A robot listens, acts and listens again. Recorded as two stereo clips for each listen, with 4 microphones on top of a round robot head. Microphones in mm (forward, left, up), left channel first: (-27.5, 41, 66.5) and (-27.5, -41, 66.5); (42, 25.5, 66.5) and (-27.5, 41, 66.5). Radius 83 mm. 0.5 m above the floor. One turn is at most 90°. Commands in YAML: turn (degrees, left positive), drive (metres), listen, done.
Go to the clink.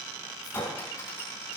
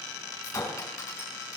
turn: 30
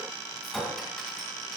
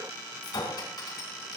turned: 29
drive: 1.0
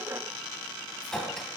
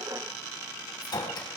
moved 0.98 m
drive: 1.0
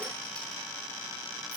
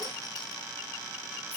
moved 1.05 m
listen: true
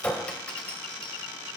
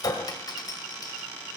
turn: 15
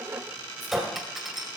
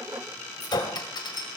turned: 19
drive: 1.0
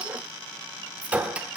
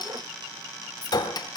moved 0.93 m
turn: -15
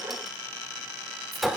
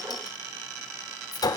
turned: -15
drive: 1.0
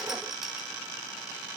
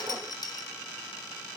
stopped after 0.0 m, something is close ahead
listen: true
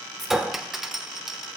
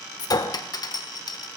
done: "I am next to the clink."